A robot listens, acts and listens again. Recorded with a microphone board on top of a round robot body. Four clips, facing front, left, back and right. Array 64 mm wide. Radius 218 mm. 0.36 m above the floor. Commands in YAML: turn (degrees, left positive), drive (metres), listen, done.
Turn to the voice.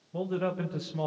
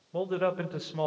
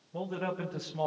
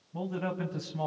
turn: 85
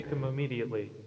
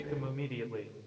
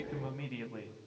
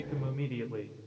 done: "Found it: a man speaking, straight ahead."